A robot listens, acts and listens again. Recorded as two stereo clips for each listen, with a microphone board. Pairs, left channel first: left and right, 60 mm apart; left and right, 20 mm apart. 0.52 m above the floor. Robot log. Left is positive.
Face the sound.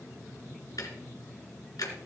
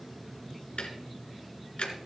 cmd yaw +90
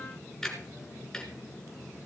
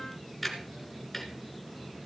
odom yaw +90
note: So it is at 10° left.
cmd yaw +10
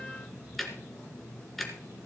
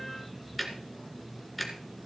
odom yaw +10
end: Found it: ticking, straight ahead, 1 to 2 m away.